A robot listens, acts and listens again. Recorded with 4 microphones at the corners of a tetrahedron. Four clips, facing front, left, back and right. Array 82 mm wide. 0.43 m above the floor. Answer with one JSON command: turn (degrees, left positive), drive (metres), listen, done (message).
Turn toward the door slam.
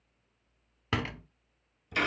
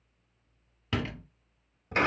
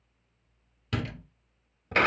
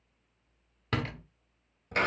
{"turn": -25}
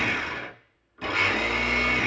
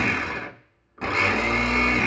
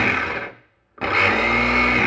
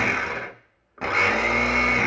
{"done": "I heard a door slam from this way, but can't make it out now."}